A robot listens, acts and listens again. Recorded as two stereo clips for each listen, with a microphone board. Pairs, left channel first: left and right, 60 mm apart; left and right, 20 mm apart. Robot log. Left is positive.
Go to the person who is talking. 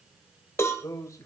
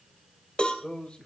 note: The man speaking: about 55° left or 125° left.
cmd yaw +55
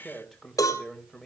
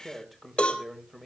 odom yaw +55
cmd fwd 1.0
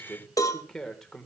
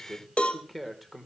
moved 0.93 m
cmd fwd 1.0
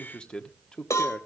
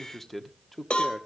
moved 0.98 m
note: The man speaking is now 15° left.
cmd yaw +15
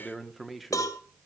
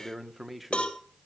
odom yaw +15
cmd fwd 1.0
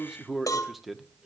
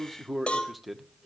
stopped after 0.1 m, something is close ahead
end: Arrived at the man speaking, straight ahead.